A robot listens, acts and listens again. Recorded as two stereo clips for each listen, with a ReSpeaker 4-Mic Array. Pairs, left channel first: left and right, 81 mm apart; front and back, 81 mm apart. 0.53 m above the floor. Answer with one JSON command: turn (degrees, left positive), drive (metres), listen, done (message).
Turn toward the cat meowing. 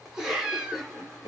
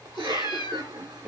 {"turn": -10}
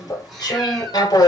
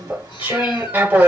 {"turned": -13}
{"listen": true}
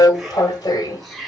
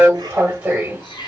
{"listen": true}
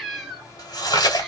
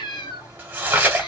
{"done": "Found it: a cat meowing, straight ahead."}